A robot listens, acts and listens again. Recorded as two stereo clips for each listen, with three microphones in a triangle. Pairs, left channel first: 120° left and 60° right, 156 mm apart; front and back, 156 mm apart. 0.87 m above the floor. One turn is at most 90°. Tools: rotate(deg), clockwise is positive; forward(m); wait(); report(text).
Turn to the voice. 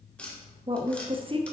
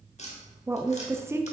rotate(90)
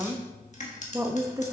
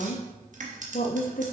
rotate(-10)
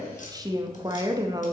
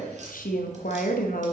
report("Found it: a woman speaking, straight ahead, under 1 m away.")